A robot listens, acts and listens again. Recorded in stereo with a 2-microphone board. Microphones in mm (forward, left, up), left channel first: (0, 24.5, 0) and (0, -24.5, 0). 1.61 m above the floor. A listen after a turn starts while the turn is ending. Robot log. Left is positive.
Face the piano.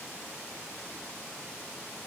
cmd idle
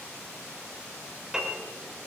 cmd yaw -30
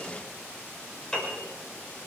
note: So it is at 20° left.
cmd yaw +20
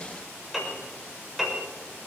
end: Found it: a piano, straight ahead.